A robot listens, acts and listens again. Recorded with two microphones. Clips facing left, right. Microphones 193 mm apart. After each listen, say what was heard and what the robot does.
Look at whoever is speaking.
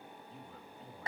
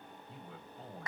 Turn 90° right.
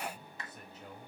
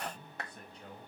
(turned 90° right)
Facing the man speaking, over 4 m away.